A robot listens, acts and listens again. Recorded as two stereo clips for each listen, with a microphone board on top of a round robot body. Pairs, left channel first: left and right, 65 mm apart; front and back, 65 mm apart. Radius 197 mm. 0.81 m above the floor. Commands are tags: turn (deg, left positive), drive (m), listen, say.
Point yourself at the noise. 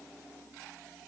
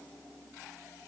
<listen/>
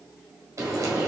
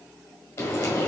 <turn deg="-45"/>
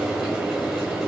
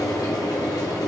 <say>Facing the frying, 1 to 2 m away.</say>